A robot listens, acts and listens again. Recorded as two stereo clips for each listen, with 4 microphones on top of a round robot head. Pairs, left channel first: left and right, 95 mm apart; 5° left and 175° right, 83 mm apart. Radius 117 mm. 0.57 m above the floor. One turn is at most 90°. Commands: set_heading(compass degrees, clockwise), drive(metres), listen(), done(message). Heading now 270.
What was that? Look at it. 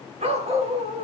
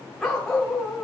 set_heading(0)
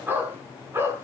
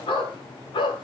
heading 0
set_heading(25)
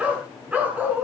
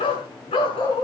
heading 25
set_heading(40)
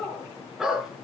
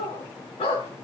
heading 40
done("Found it: a dog barking, straight ahead.")